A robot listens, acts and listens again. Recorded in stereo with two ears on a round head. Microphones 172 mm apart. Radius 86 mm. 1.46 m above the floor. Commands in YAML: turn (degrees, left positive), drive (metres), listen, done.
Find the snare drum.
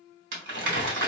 listen: true
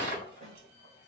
turn: -35
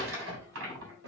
listen: true
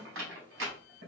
listen: true
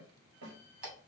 turn: -105
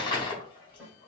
done: "Facing the snare drum."